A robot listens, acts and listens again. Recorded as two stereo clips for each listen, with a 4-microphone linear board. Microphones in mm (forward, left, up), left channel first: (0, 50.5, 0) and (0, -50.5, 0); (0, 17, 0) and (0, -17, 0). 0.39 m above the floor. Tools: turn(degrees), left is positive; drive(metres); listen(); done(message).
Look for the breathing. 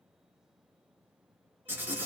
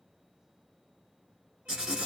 listen()
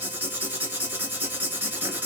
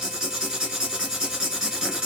listen()
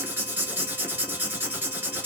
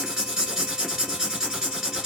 done("I can't make out breathing, only writing.")